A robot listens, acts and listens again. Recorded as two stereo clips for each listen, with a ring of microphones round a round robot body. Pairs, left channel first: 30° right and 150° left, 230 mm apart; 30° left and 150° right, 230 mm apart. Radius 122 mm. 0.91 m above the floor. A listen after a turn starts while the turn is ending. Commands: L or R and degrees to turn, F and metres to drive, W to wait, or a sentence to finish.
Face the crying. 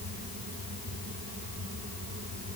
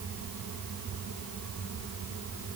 W
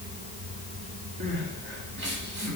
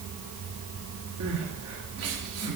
R165
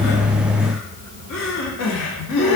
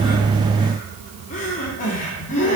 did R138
R30
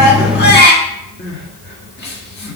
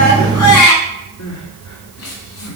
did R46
L15
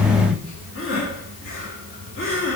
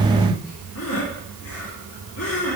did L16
Found it: crying, straight ahead, 1 to 2 m away.